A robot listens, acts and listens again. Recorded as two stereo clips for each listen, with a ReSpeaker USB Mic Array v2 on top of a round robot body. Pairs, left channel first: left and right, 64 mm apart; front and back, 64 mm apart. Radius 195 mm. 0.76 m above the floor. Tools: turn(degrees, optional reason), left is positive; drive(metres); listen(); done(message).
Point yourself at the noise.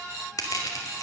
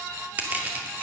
turn(degrees=115, reason="The crushing: 115° left.")
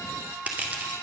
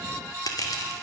turn(degrees=-25, reason="The crushing is now 25° right.")
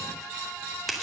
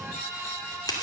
done("Found it: crushing, straight ahead.")